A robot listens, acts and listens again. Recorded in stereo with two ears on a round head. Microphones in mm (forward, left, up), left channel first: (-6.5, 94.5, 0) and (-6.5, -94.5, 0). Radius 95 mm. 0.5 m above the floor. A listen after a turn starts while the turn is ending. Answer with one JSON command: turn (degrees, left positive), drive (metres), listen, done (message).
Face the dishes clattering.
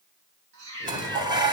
{"turn": -20}
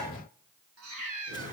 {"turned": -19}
{"listen": true}
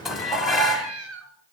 {"done": "Facing the dishes clattering."}